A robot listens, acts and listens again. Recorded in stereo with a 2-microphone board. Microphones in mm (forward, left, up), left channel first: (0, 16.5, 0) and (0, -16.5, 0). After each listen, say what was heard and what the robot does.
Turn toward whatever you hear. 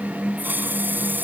Turn 90° right.
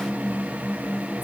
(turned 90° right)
Keep listening.
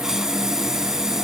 The hiss is now 15° right. Turn 15° right.
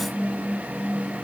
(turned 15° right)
Keep listening.
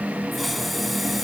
Keep listening.
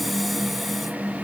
I heard a hiss from this way, but can't make it out now.